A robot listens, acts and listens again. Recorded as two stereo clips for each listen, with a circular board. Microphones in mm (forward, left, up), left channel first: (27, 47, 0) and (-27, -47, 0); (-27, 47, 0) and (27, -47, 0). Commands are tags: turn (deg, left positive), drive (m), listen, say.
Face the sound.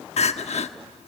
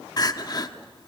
<turn deg="65"/>
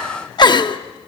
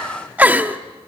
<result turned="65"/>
<turn deg="15"/>
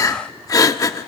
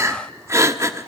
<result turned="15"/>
<say>Facing the crying.</say>